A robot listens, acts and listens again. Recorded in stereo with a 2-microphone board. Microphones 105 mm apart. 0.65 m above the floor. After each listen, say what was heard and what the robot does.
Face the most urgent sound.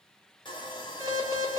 The alarm: about 30° right or 150° right. Turn 30° right.
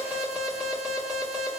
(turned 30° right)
Found it: an alarm, straight ahead, 1 to 2 m away.